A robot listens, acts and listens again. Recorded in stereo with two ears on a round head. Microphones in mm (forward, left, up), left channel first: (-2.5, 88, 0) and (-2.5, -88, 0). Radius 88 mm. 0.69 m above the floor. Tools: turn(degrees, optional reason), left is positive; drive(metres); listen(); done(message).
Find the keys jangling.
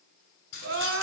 turn(degrees=70, reason="The keys jangling: about 70° left or 110° left.")
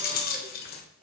turn(degrees=50, reason="So it is at 50° left.")
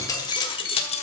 turn(degrees=35, reason="The keys jangling is now 35° left.")
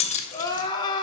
turn(degrees=35, reason="The keys jangling is now 35° left.")
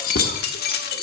turn(degrees=50, reason="The keys jangling is now 50° left.")
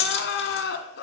turn(degrees=30, reason="The keys jangling is now 30° left.")
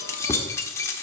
turn(degrees=15, reason="The keys jangling is now 15° left.")
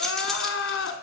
done("Facing the keys jangling, 1 to 2 m away.")